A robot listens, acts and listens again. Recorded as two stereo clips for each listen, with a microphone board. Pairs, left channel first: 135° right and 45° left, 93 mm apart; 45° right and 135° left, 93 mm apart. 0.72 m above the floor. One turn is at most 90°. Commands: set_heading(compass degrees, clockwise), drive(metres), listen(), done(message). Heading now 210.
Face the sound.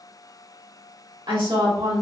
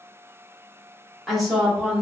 set_heading(155)
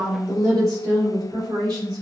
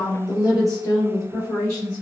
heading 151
done("Found it: a woman speaking, straight ahead.")